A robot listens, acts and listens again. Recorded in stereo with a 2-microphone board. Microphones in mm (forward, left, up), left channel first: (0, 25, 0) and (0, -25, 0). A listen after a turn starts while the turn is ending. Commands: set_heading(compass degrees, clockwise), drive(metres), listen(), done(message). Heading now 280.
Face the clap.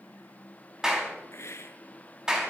set_heading(310)
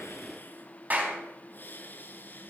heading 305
set_heading(90)
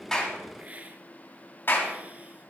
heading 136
set_heading(91)
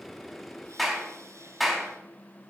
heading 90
done("Facing the clap.")